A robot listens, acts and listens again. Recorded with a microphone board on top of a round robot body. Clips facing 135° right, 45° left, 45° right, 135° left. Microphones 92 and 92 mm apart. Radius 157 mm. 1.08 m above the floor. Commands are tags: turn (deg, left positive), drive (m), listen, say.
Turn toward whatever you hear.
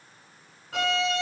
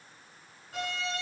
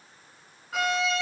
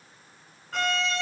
<turn deg="-130"/>
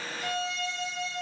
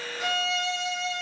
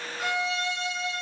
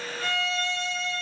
<turn deg="30"/>
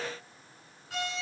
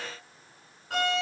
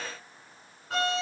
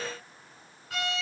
<turn deg="10"/>
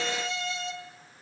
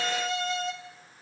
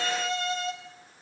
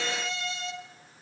<say>Found it: a violin, straight ahead.</say>